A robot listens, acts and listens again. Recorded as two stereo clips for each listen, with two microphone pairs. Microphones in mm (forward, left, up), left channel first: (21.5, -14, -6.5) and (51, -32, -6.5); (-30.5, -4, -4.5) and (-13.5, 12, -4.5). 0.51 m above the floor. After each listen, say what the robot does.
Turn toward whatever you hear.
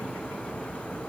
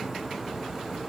Keep listening.
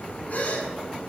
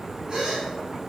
Turn 105° left.
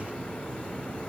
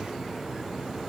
I heard a gasp from this way, but can't make it out now.